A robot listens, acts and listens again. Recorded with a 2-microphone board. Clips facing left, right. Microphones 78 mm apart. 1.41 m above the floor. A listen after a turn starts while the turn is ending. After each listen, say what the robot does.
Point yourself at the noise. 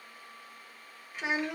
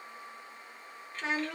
Turn 15° left.
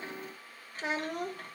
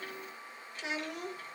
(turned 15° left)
Turn 130° left.
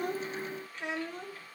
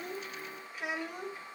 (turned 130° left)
Turn 15° right.
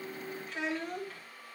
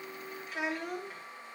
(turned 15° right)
Turn 15° right.
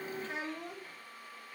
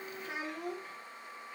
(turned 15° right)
Turn 15° right.
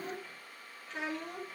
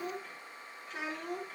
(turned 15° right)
Facing the child speaking.